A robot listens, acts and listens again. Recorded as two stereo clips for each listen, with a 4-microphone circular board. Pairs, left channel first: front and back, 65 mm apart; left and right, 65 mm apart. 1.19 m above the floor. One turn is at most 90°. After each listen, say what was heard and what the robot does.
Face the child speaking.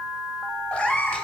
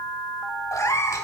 Keep listening.
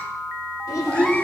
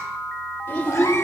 The child speaking: 30° left. Turn 30° left.
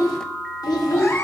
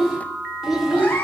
Found it: a child speaking, straight ahead.